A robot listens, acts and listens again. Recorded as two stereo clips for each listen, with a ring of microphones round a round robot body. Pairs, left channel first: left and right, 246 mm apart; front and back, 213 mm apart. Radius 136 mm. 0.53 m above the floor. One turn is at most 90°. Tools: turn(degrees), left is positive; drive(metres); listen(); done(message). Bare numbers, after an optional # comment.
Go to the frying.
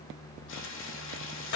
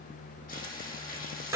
# The frying: 50° left.
turn(50)
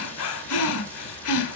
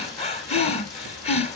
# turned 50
listen()
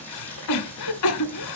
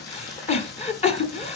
drive(1.0)
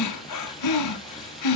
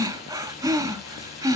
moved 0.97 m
listen()
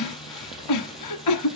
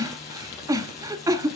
listen()
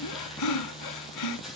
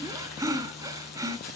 drive(1.0)
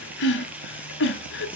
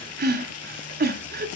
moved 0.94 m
drive(1.0)
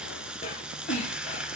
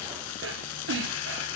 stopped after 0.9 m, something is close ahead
done("I am next to the frying.")